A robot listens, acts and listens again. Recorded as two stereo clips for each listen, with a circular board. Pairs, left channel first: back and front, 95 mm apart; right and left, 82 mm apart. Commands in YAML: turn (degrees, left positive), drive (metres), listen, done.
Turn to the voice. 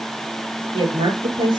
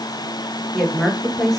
done: "Found it: a woman speaking, straight ahead, over 4 m away."